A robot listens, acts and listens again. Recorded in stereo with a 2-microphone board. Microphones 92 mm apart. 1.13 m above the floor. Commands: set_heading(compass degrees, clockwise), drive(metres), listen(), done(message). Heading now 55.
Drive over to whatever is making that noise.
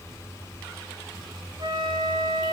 set_heading(105)
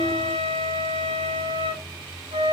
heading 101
set_heading(176)
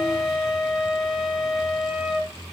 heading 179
drive(1.0)
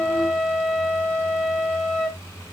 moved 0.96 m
set_heading(169)
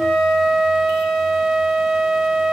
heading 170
drive(1.0)
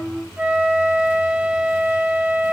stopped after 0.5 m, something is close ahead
set_heading(180)
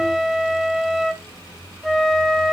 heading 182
done("I am next to the flute.")